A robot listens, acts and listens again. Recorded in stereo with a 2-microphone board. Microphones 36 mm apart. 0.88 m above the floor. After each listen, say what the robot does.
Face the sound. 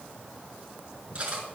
Turn 30° right.
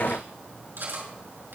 Turn 120° right.
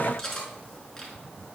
Turn 10° left.
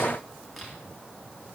Keep listening.
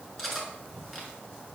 Found it: cutlery clinking, straight ahead, over 4 m away.